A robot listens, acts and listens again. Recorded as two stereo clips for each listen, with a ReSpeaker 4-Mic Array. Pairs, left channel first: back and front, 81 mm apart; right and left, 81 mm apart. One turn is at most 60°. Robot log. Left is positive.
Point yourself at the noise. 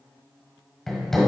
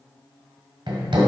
note: The hammering: 95° left.
cmd yaw +60
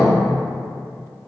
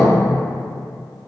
note: Nothing new. It was at 35° left.
cmd yaw +35
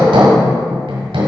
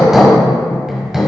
end: Found it: hammering, straight ahead, 1 to 2 m away.